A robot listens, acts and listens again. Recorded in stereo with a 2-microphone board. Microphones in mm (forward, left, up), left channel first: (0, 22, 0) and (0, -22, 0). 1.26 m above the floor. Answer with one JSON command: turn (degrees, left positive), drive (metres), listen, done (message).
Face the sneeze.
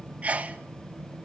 {"turn": -35}
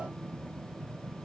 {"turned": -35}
{"listen": true}
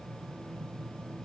{"done": "I heard a sneeze, but can't make it out now. It was about straight ahead or 110° right."}